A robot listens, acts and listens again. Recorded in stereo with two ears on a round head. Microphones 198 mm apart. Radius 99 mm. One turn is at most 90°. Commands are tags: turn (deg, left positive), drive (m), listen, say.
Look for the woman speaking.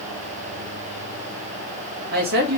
<turn deg="-45"/>
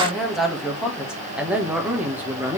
<turn deg="-10"/>
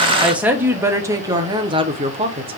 <turn deg="-25"/>
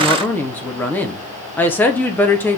<turn deg="10"/>
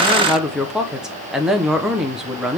<say>Facing the woman speaking.</say>